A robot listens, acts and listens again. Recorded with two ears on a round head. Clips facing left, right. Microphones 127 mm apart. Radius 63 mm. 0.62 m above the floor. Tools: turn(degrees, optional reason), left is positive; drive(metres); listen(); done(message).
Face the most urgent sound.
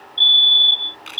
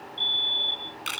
turn(degrees=45, reason="The fire alarm: about 45° left or 135° left.")
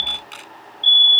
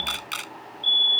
turn(degrees=90, reason="So it is at 90° left.")
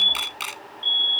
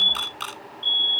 done("Facing the fire alarm.")